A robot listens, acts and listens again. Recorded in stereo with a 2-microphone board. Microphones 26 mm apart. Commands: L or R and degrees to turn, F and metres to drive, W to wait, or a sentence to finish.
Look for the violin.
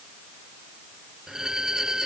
R25
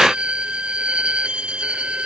R130
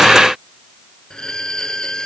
L30
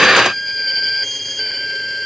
L10
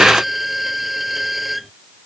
Facing the violin.